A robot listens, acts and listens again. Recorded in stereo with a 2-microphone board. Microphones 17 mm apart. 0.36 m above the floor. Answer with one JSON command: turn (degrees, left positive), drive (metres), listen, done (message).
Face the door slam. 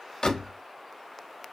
{"turn": 50}
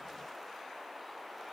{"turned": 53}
{"listen": true}
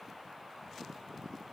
{"done": "I heard a door slam, but can't make it out now. It was about straight ahead or 75° left."}